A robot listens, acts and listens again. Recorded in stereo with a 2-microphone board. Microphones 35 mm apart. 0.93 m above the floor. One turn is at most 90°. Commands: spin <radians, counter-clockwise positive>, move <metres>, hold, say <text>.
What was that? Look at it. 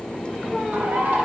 spin -1.05
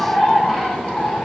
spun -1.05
say Found it: a bird, straight ahead, 1 to 2 m away.